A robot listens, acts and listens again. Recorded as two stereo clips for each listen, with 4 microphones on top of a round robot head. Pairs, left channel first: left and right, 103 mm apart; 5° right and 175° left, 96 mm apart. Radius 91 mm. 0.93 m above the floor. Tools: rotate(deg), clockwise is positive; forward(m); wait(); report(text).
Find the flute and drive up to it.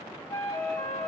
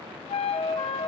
rotate(-15)
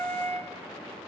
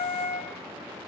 forward(1.0)
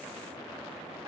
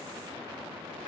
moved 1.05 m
wait()
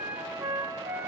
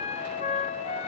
rotate(10)
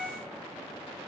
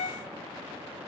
forward(1.0)
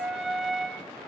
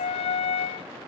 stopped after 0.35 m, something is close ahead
report("I am next to the flute.")